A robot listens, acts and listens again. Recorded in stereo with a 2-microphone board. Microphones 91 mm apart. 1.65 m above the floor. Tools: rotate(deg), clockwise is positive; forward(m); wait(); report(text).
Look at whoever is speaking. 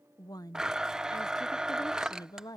rotate(-45)
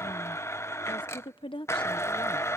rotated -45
rotate(-90)
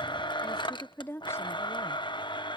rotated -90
rotate(-30)
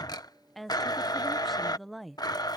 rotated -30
report("Facing the woman speaking.")